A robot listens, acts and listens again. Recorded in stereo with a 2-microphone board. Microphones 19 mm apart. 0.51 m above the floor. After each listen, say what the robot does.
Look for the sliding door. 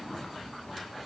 Keep listening.
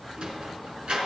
Turn 90° right.
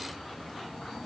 Keep listening.
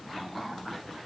Keep listening.
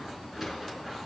Turn 10° right.
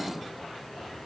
Keep listening.
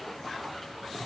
Keep listening.
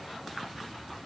I heard a sliding door from this way, but can't make it out now.